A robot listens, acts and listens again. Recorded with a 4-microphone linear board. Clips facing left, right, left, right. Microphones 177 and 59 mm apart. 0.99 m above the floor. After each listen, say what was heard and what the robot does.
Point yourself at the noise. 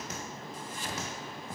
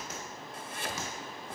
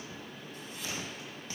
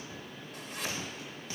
The chopping: about 55° right or 125° right. Turn 55° right.
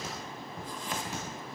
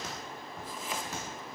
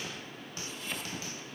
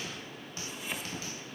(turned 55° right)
Facing the chopping, 1 to 2 m away.